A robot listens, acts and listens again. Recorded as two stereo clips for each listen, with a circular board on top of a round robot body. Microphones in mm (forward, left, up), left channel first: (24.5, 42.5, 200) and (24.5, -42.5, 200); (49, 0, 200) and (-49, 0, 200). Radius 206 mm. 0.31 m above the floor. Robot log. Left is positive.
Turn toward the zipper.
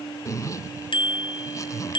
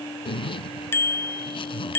note: The zipper: 35° left.
cmd yaw +35
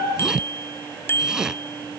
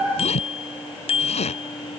end: Facing the zipper.